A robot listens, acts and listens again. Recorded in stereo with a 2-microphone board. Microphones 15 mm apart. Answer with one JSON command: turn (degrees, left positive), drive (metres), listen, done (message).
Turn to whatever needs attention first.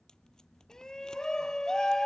{"turn": 45}
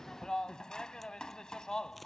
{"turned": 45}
{"turn": 80}
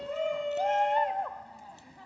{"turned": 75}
{"done": "Found it: a shout, straight ahead."}